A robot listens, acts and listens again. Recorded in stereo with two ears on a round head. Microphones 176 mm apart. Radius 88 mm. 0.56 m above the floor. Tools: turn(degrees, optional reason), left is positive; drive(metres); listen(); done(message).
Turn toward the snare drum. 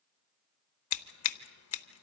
listen()
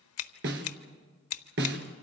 turn(degrees=-65, reason="The snare drum: about 65° right or 115° right.")
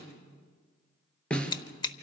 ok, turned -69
done("Found it: a snare drum, straight ahead, 2 to 4 m away.")